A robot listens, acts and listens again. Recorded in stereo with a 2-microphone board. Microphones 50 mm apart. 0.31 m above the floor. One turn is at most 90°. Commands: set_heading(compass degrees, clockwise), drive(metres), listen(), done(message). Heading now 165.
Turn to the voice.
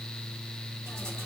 listen()
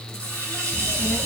set_heading(195)
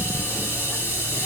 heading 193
set_heading(163)
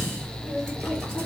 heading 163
done("Found it: a child speaking, straight ahead, over 4 m away.")